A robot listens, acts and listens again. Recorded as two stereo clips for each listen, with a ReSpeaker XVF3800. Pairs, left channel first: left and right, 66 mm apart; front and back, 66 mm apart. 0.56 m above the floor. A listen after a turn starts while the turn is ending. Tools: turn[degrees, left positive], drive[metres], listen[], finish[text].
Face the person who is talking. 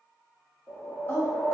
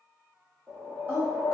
Thought: The woman speaking: 130° left.
Action: turn[130]
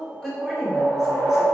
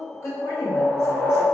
Thought: The woman speaking is now 10° right.
Action: turn[-10]
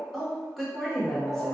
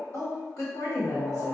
Action: finish[Found it: a woman speaking, straight ahead, 1 to 2 m away.]